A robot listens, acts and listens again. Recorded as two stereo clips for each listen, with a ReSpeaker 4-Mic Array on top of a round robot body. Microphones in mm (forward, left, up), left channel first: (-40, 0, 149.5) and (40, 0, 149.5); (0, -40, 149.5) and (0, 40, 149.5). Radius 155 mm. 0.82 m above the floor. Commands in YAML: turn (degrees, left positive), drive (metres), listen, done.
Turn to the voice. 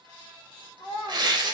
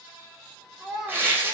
turn: 180
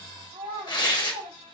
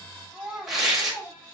done: "Facing the child speaking, 2 to 4 m away."